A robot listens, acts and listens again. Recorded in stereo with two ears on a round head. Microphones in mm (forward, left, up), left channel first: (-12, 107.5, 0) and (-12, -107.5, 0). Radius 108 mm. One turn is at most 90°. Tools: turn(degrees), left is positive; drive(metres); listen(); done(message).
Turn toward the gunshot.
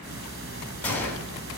turn(degrees=30)
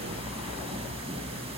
listen()
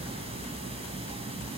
done("I heard a gunshot, but can't make it out now. It was about 20° right or 140° left.")